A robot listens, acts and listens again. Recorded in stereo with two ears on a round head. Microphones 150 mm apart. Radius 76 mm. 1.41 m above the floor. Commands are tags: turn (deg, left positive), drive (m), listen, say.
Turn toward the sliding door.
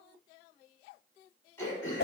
<listen/>
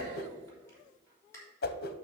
<listen/>
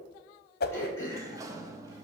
<turn deg="-20"/>
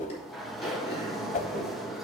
<say>Facing the sliding door.</say>